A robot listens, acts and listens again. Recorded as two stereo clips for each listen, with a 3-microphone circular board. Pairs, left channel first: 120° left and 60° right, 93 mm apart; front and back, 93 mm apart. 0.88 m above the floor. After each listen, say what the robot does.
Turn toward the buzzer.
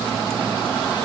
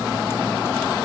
Keep listening.
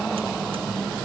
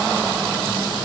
Keep listening.
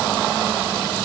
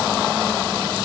I can't make out a buzzer.